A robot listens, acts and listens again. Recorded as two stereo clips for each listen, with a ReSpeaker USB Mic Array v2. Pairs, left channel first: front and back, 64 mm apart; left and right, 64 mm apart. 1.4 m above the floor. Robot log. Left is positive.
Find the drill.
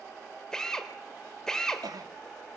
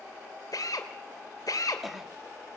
note: The drill: 80° left.
cmd yaw +80
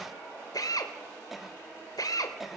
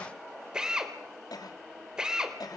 note: The drill is now 10° right.
cmd yaw -10
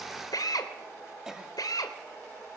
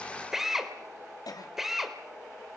end: Facing the drill, 2 to 4 m away.